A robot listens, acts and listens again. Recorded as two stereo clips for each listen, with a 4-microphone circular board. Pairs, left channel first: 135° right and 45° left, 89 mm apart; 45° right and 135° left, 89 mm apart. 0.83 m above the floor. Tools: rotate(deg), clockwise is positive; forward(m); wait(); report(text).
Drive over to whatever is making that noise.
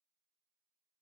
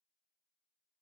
wait()
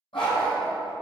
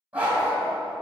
rotate(150)
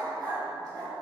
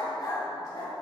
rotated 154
forward(1.0)
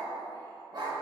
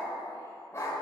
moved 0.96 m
rotate(-15)
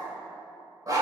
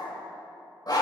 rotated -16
forward(1.0)
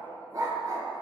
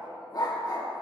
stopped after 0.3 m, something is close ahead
report("Arrived at the dog barking, straight ahead.")